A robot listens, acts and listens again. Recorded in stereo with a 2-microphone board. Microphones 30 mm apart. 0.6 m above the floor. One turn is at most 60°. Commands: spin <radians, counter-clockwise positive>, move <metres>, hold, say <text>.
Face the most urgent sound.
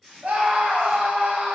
spin -0.87
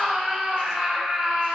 spin -0.17
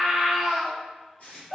say Found it: a scream, straight ahead.